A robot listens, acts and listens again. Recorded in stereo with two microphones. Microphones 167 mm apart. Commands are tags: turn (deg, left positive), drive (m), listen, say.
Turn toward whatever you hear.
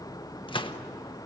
<turn deg="30"/>
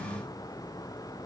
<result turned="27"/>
<listen/>
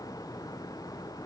<say>I heard a gunshot, but can't make it out now. It was about straight ahead or 125° left.</say>